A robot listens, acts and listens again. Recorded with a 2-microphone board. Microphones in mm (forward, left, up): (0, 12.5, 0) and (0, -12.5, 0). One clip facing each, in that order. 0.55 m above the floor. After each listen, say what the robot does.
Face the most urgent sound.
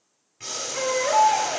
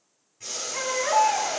Turn 30° right.
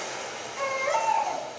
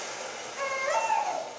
Turn 20° left.
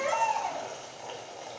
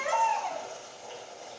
Facing the baby crying, 2 to 4 m away.